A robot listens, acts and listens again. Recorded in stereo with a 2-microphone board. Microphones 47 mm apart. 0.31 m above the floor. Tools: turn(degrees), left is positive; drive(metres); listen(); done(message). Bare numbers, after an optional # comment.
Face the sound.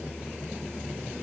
listen()
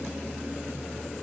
listen()
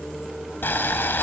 # The boiling: about 50° left or 130° left.
turn(50)
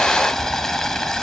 # So it is at 15° left.
turn(15)
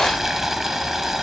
done("Facing the boiling, 1 to 2 m away.")